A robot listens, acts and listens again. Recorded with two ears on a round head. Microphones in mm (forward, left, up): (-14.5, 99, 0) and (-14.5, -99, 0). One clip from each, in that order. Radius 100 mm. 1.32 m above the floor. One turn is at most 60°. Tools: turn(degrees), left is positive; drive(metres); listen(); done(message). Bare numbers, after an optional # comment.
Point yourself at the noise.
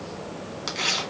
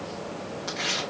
# The tearing paper: about 70° left or 110° left.
turn(60)
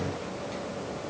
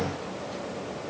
listen()
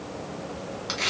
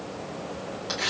# So it is at 15° left.
turn(15)
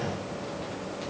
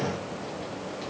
listen()
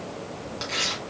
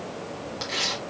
done("Facing the tearing paper.")